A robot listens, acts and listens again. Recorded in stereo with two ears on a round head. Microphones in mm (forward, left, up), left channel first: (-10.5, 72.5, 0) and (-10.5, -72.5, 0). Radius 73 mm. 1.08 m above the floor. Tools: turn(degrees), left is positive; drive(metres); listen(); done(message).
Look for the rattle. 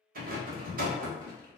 turn(degrees=-55)
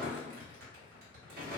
turn(degrees=-60)
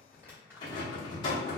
turn(degrees=30)
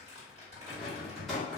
done("Facing the rattle, under 1 m away.")